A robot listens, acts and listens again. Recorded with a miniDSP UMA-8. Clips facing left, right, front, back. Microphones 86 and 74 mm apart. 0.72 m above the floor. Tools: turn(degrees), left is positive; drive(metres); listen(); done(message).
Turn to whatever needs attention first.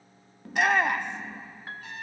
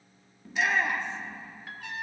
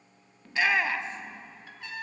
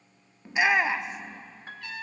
turn(degrees=110)
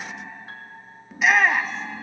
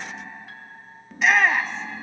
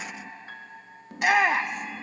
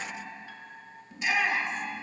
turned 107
done("Facing the shout, under 1 m away.")